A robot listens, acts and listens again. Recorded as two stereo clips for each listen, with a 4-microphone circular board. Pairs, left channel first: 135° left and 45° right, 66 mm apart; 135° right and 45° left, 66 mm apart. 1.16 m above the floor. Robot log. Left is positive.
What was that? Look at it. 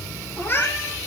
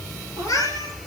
note: The cat meowing: 165° right.
cmd yaw -165
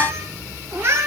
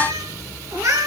end: Facing the cat meowing, over 4 m away.